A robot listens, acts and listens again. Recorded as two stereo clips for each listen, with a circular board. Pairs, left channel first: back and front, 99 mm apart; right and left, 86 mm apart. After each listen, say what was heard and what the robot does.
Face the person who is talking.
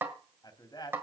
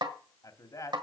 The man speaking: 135° right. Turn 135° right.
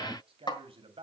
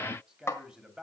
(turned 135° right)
The man speaking is now 10° left. Turn 10° left.
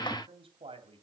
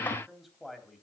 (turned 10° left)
Facing the man speaking.